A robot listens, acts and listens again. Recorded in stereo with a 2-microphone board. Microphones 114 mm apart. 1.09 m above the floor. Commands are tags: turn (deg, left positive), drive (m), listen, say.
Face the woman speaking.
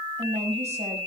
<turn deg="-90"/>
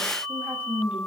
<turn deg="-10"/>
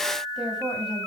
<say>Facing the woman speaking, over 4 m away.</say>